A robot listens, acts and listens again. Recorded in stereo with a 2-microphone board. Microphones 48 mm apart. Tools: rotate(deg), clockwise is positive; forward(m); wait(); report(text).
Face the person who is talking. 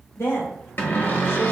rotate(-70)
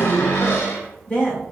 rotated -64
rotate(-20)
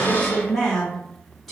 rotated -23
report("Facing the woman speaking, 1 to 2 m away.")